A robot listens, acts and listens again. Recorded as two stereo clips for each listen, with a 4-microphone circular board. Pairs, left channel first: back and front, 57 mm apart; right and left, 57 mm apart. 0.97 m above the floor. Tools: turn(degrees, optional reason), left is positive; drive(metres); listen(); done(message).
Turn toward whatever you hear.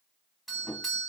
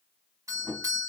turn(degrees=90, reason="The doorbell: 90° left.")
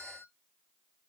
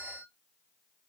turn(degrees=-15, reason="The doorbell is now 15° right.")
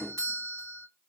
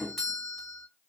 done("Found it: a doorbell, straight ahead, 1 to 2 m away.")